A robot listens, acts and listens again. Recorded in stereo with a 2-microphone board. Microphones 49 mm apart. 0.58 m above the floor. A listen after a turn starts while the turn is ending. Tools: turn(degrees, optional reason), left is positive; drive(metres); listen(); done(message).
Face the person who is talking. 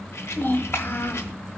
turn(degrees=50, reason="The child speaking: about 50° left or 130° left.")
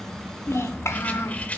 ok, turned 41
turn(degrees=90, reason="So it is at 90° left.")
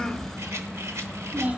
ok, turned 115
turn(degrees=-25, reason="The child speaking is now 25° right.")
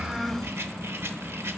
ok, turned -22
done("Facing the child speaking.")